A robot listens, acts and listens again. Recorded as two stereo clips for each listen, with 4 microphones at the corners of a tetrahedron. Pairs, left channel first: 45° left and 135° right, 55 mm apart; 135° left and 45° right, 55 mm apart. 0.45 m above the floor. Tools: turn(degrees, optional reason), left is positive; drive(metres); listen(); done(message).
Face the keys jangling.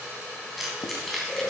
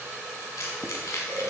turn(degrees=135, reason="The keys jangling: 135° left.")
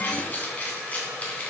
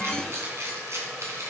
turn(degrees=-20, reason="The keys jangling is now 20° right.")
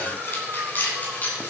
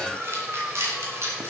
turn(degrees=-10, reason="The keys jangling is now 10° right.")
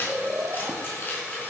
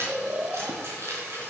turn(degrees=-10, reason="The keys jangling is now 10° right.")
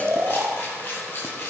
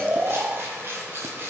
done("Found it: keys jangling, straight ahead.")